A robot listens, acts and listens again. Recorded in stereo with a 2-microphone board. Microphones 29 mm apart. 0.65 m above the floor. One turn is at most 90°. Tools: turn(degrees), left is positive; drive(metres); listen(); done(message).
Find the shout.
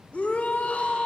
turn(degrees=55)
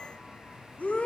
turn(degrees=65)
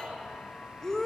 turn(degrees=20)
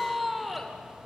done("Found it: a shout, straight ahead, 2 to 4 m away.")